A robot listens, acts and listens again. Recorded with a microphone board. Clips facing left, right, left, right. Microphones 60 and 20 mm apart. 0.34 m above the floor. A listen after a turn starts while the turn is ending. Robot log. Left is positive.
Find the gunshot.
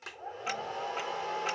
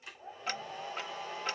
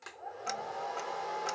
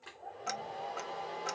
cmd idle
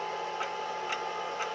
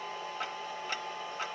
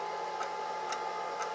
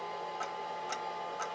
cmd idle
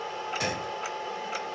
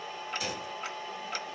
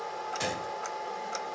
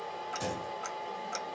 note: The gunshot: about 60° left or 120° left.
cmd yaw +60
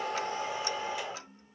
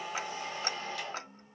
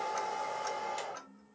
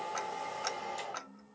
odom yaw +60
cmd idle
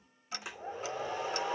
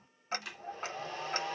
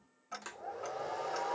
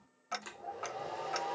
end: I heard a gunshot, but can't make it out now. It was about straight ahead or 60° left.